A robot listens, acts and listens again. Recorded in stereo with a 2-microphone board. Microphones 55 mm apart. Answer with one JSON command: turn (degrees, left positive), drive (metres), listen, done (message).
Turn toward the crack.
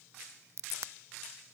{"turn": -60}
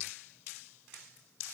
{"listen": true}
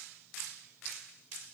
{"done": "I heard a crack, but can't make it out now. It was about straight ahead or 60° right."}